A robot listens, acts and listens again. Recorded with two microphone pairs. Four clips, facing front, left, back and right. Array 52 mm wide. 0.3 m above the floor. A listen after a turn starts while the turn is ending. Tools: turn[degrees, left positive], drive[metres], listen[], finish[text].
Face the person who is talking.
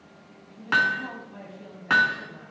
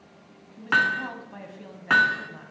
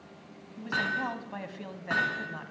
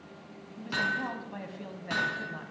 Thought: The woman speaking: 170° right.
Action: turn[-170]
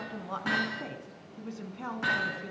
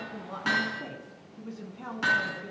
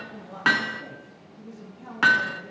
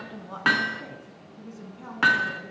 Thought: The woman speaking is now 10° left.
Action: turn[10]
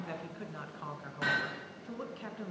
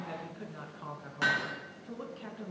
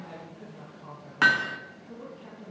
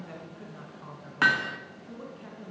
Thought: The woman speaking is now 10° left.
Action: turn[10]
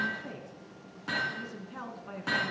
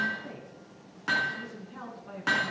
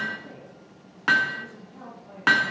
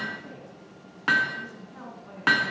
Action: finish[Found it: a woman speaking, straight ahead, 2 to 4 m away.]